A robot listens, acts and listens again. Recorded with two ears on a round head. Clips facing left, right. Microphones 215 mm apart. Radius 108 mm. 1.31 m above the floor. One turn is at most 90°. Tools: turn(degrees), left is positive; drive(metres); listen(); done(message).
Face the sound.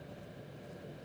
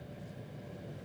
listen()
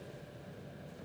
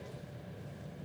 listen()
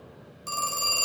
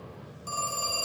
turn(degrees=25)
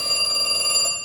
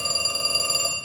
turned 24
done("Found it: a phone ringing, straight ahead.")